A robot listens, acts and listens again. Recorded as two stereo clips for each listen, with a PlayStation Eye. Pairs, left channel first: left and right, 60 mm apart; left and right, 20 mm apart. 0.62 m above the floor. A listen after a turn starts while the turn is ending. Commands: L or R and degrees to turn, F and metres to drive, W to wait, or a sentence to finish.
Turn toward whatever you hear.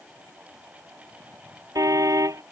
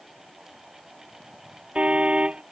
R75
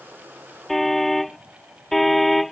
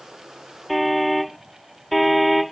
Found it: a car horn, straight ahead.